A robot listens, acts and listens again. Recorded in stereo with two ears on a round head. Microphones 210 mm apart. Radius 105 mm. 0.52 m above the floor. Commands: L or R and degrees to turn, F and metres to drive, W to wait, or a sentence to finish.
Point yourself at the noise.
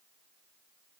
W
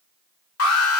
L70
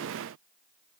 W
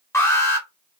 L15
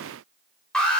Found it: an alarm, straight ahead.